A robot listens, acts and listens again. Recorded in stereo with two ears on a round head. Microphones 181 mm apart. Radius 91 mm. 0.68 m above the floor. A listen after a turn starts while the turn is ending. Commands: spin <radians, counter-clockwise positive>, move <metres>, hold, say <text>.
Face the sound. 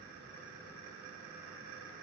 hold
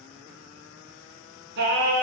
spin -1.05
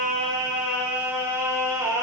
spin -0.26
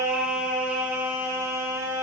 spin -0.26
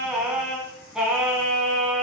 say Found it: singing, straight ahead, 1 to 2 m away.